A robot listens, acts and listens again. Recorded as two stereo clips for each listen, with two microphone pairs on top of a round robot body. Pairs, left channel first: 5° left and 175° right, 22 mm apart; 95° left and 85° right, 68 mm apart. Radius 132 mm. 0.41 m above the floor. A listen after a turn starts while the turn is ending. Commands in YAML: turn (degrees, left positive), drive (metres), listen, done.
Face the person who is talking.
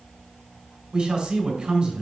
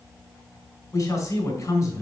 turn: 140
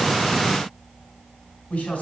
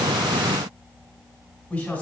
turn: 25
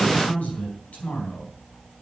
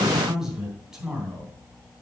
done: "Found it: a man speaking, straight ahead, 2 to 4 m away."